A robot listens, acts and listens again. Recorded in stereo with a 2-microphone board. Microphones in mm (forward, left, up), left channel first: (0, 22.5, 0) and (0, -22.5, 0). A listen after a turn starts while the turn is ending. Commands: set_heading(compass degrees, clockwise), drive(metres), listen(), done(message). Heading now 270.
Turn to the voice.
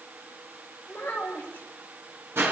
set_heading(235)
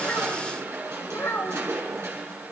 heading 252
set_heading(127)
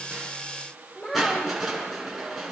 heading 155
set_heading(130)
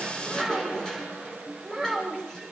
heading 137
set_heading(127)
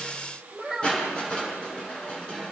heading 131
done("Facing the child speaking, over 4 m away.")